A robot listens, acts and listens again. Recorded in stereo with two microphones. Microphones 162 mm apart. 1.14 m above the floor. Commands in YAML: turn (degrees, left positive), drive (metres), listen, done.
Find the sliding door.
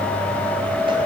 listen: true
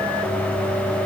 listen: true
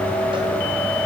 done: "I can't make out a sliding door to turn to."